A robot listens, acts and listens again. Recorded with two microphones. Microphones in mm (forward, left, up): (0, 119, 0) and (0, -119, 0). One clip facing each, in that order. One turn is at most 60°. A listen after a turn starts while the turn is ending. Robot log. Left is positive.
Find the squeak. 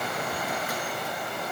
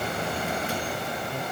cmd idle
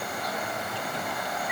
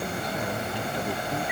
cmd idle
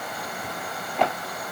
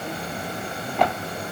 end: I can't make out a squeak.